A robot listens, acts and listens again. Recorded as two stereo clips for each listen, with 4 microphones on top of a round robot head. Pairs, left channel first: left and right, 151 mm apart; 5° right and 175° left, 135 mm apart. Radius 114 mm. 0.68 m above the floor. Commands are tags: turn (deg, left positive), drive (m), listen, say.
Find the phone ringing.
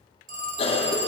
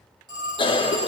<turn deg="-115"/>
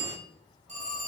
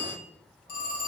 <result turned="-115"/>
<turn deg="-35"/>
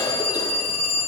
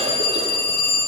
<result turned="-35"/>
<say>Facing the phone ringing.</say>